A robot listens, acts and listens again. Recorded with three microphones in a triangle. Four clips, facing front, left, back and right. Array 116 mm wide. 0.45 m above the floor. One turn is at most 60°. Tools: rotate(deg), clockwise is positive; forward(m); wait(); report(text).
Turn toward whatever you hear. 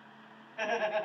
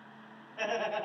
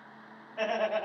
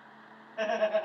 rotate(60)
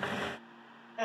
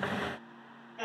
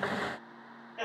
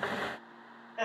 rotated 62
rotate(60)
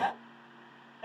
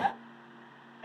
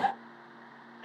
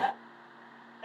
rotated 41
rotate(55)
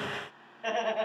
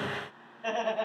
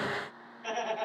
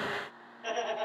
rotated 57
report("Found it: laughter, straight ahead, 2 to 4 m away.")